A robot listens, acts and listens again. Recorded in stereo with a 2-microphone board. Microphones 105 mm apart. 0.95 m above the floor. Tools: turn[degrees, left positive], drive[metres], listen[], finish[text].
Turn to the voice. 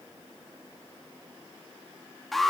Action: listen[]
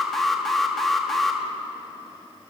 Action: listen[]
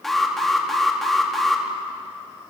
Action: finish[I can't make out anyone speaking, only an alarm.]